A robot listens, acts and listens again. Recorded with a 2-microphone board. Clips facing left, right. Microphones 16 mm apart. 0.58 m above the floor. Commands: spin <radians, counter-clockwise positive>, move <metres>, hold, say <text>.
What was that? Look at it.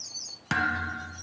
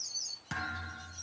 spin 0.70
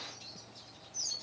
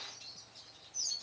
hold
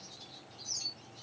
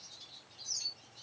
say I heard a thud, but can't make it out now. It was about straight ahead or 100° left.